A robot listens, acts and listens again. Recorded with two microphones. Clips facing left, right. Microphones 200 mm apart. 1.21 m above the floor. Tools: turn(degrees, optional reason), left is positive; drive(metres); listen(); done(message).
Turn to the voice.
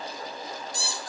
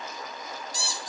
listen()
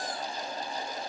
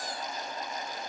listen()
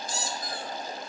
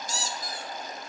done("I can't make out anyone speaking, only a squeak.")